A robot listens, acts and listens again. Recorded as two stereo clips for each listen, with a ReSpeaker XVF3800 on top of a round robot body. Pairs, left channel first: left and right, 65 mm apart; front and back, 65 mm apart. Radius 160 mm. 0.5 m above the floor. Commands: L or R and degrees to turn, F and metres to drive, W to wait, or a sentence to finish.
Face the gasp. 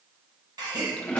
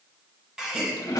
R100
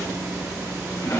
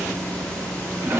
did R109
Facing where the gasp came from. I can't hear it now.